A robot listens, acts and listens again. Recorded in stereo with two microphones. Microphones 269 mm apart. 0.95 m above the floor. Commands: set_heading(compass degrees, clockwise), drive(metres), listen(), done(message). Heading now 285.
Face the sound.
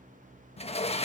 set_heading(260)
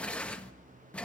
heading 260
done("Found it: a sliding door, straight ahead, 1 to 2 m away.")